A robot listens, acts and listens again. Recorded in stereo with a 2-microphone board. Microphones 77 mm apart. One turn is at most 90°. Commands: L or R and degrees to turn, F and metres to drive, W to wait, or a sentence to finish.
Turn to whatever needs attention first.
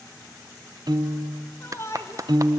L40
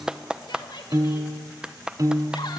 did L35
L90
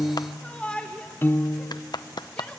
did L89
L15
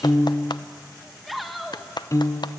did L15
Found it: a shout, straight ahead, 1 to 2 m away.